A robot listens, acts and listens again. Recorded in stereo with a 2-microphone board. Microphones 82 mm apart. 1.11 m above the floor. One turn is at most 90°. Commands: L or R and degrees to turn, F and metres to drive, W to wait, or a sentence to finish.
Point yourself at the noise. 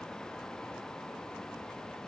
W
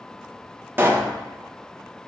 R25
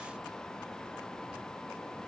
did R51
W
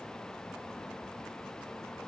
I heard a pop, but can't make it out now. It was about 25° left or 105° right.